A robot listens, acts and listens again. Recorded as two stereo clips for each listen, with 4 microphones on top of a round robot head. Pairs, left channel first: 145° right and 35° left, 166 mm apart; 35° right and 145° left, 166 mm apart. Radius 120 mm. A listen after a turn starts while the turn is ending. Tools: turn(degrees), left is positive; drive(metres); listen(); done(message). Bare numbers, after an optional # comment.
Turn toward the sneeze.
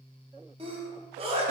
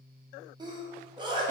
# The sneeze: 85° left.
turn(85)
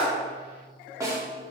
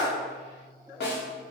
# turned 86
done("I heard a sneeze from this way, but can't make it out now.")